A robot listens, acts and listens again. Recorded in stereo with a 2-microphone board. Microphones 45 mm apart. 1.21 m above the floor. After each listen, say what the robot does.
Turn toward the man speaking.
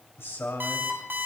Turn 90° left.
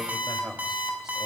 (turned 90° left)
Found it: a man speaking, straight ahead, 2 to 4 m away.